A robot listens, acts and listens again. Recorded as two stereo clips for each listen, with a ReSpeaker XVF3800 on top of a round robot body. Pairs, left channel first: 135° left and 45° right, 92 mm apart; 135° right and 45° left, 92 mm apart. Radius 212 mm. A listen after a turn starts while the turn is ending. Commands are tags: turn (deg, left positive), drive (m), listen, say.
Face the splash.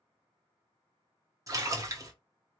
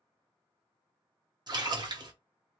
<say>Facing the splash, 1 to 2 m away.</say>